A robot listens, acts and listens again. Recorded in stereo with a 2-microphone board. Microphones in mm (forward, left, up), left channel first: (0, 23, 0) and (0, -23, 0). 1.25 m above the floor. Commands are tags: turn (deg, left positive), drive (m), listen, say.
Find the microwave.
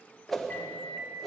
<turn deg="40"/>
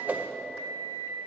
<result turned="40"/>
<turn deg="100"/>
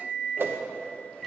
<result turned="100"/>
<say>Facing the microwave, 1 to 2 m away.</say>